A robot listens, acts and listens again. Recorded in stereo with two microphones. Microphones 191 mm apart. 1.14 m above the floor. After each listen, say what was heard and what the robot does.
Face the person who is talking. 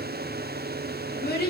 The child speaking: about 60° left or 120° left. Turn 60° left.
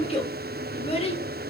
So it is at 40° left. Turn 40° left.
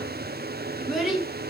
Facing the child speaking.